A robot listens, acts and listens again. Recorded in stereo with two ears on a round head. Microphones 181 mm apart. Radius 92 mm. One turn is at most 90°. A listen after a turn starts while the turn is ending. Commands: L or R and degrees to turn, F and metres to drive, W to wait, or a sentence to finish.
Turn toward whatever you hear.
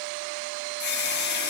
L55
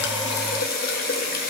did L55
L55
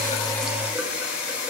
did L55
Facing the running tap, 1 to 2 m away.